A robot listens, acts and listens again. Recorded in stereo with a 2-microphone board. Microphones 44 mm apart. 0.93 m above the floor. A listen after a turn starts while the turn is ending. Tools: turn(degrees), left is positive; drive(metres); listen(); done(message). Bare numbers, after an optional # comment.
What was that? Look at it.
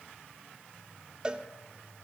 # The cowbell: about 20° right or 160° right.
turn(-20)
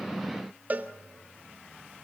# So it is at 135° right.
turn(-135)
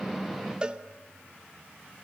# The cowbell is now 25° right.
turn(-25)
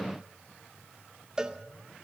# The cowbell is now 20° right.
turn(-20)
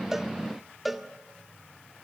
done("Facing the cowbell, under 1 m away.")